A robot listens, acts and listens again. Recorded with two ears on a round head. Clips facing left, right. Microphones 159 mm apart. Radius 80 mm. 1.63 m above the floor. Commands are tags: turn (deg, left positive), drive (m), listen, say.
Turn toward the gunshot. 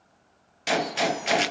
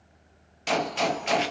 <turn deg="30"/>
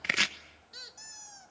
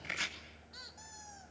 <listen/>
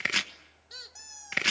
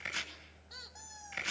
<say>I heard a gunshot, but can't make it out now. It was about 25° right or 145° left.</say>